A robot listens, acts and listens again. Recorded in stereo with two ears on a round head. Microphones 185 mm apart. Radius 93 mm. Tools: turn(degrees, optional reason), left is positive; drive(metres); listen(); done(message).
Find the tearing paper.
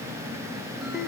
listen()
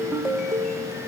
listen()
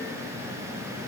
done("I can't make out tearing paper, only a ringtone.")